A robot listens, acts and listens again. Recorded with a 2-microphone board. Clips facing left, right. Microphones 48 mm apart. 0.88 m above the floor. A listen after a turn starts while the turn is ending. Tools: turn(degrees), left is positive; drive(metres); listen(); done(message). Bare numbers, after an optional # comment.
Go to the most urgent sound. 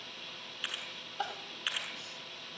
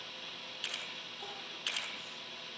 turn(90)
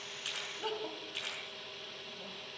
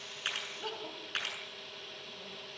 drive(1.0)
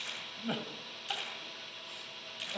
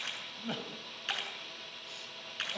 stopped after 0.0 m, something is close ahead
# The crying is now 10° left.
turn(10)
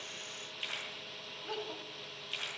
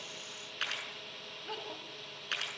done("Blocked. The crying is further on, straight ahead.")